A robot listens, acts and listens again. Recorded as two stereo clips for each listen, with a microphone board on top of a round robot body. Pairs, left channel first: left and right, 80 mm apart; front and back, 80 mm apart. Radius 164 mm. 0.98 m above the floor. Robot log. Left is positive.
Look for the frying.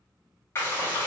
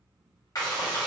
note: The frying: 35° left.
cmd yaw +35
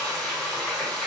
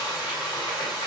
end: Facing the frying, 1 to 2 m away.